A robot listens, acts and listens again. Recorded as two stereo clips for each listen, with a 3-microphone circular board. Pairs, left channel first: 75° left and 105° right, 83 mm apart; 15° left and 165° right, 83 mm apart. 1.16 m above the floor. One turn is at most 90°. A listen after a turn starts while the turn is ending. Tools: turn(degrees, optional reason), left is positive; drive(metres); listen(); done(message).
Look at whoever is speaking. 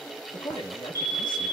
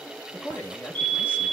turn(degrees=80, reason="The man speaking: 80° left.")
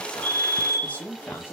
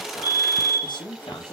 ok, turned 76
done("Found it: a man speaking, straight ahead.")